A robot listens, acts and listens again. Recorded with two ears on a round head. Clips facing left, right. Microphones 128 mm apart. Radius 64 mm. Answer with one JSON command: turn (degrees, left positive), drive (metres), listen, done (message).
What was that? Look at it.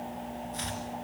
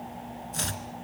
{"turn": -60}
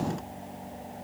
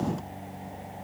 {"listen": true}
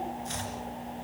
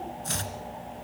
{"turn": -60}
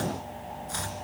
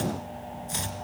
{"turn": -20}
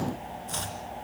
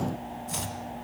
{"turn": -10}
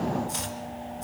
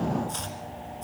{"done": "Facing the chopping."}